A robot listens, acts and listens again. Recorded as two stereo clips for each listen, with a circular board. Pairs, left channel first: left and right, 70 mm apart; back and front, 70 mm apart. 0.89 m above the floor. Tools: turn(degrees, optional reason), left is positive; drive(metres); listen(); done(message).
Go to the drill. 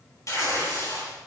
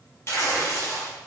listen()
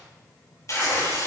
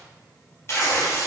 listen()
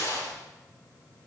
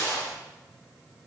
done("I can't make out a drill, only tearing paper.")